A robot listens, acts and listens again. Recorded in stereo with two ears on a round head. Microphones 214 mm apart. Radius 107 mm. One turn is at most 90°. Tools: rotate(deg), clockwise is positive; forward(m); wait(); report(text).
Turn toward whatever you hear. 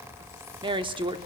rotate(20)
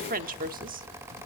rotate(90)
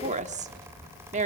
rotate(35)
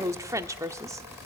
rotate(15)
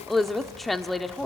report("Facing the woman speaking.")